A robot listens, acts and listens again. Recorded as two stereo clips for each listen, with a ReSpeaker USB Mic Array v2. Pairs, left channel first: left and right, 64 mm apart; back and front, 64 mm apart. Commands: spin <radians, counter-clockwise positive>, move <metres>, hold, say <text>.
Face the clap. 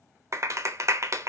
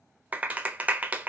spin -1.13
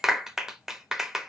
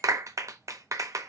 spin -0.17
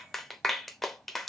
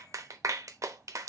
say Facing the clap.